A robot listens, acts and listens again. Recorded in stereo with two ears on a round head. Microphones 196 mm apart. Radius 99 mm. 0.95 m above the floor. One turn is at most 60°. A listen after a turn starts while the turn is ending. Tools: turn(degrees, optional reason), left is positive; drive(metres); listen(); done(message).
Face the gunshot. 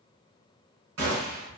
turn(degrees=-60, reason="The gunshot: about 65° right or 115° right.")
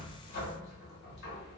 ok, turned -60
listen()
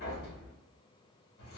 done("I heard a gunshot, but can't make it out now. It was about 5° right or 55° right.")